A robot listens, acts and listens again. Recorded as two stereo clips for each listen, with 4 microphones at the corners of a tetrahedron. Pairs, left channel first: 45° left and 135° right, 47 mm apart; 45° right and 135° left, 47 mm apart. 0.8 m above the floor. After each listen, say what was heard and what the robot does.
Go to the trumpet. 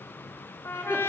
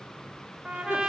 The trumpet: 60° left. Turn 60° left.
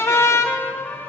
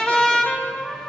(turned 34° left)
The trumpet is now 25° left. Turn 25° left.
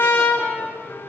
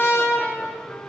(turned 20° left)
Drive 1.0 m forward.
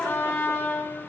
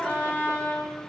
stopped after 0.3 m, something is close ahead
Something is in my way. I am facing the trumpet but have not reached it.